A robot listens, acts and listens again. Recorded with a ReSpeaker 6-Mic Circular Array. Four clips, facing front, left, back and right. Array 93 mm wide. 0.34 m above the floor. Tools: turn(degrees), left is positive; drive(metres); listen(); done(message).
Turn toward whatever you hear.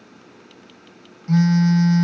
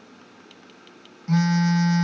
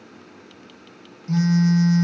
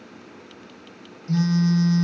turn(degrees=65)
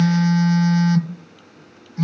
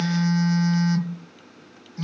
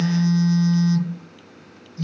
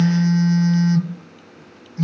done("Found it: a phone buzzing, straight ahead.")